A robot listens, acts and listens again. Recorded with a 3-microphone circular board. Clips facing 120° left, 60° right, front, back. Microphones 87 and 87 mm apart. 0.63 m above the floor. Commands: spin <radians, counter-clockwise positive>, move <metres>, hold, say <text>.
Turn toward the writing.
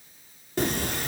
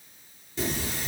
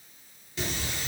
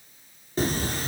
spin 2.44
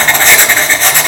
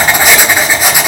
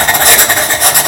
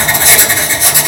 spin 0.26
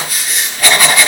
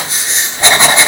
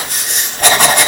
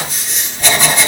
say Found it: writing, straight ahead.